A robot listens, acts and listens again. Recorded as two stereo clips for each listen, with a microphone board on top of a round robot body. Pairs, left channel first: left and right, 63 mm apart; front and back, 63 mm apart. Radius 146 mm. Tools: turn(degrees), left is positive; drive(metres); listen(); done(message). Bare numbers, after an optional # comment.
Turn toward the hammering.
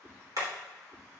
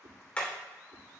# The hammering: 70° right.
turn(-70)
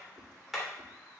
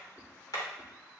done("Facing the hammering.")